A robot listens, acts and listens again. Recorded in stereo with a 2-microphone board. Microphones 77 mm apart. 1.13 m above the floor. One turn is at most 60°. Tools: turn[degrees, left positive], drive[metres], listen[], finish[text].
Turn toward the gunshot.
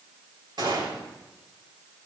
Thought: The gunshot: about 70° right or 110° right.
Action: turn[-60]
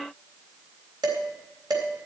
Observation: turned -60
Action: listen[]
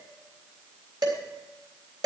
Action: finish[I heard a gunshot, but can't make it out now. It was about 10° right or 50° right.]